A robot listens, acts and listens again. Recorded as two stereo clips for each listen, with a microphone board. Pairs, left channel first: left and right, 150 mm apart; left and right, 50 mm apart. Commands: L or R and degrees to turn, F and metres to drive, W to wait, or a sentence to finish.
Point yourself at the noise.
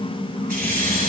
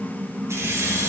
R90
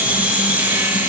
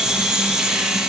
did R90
R15
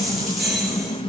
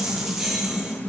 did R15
Facing the keys jangling.